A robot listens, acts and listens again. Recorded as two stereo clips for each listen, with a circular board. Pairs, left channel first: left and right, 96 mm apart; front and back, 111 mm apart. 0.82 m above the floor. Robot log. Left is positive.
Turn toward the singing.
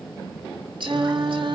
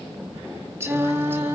note: The singing: 110° right.
cmd yaw -110
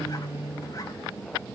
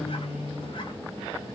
note: The singing is now 25° right.
cmd yaw -25
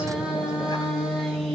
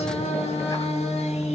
end: Found it: singing, straight ahead, over 4 m away.